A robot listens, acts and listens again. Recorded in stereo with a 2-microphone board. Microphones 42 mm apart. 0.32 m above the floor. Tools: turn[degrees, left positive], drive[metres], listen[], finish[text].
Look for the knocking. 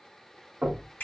Thought: The knocking: about 40° right or 140° right.
Action: turn[-40]
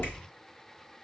Action: finish[Facing the knocking, 1 to 2 m away.]